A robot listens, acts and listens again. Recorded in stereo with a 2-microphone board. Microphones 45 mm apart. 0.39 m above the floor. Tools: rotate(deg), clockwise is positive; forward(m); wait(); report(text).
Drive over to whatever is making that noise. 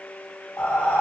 rotate(-45)
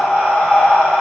rotate(-10)
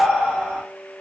forward(1.0)
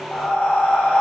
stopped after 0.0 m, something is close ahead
report("Blocked. The breathing is further on, straight ahead.")